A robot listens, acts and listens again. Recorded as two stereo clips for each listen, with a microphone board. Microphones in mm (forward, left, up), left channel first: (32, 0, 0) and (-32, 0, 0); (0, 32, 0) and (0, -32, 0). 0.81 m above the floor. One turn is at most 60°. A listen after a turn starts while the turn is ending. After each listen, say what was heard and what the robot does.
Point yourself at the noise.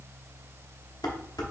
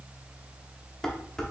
The dishes clattering: 10° left. Turn 10° left.
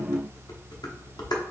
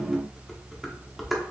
Facing the dishes clattering, under 1 m away.